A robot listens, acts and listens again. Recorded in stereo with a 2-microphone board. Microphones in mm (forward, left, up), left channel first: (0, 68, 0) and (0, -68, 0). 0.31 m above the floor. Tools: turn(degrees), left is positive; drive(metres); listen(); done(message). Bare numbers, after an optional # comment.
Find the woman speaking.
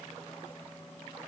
listen()
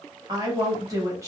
# The woman speaking: about 20° right or 160° right.
turn(-20)
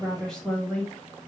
# So it is at 10° left.
turn(10)
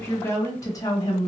# The woman speaking is now 30° left.
turn(30)
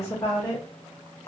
# The woman speaking is now 30° left.
turn(30)
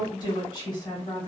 # The woman speaking is now 30° left.
turn(30)
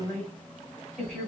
done("Found it: a woman speaking, straight ahead.")